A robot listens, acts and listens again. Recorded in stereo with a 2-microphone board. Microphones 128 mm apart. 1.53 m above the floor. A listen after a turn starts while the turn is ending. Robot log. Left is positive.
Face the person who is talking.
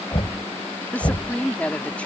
cmd yaw +30
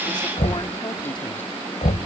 cmd idle
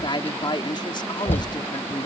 note: So it is at 140° left.
cmd yaw +140
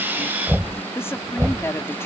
note: The woman speaking is now 20° left.
cmd yaw +20
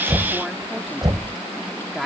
end: Found it: a woman speaking, straight ahead.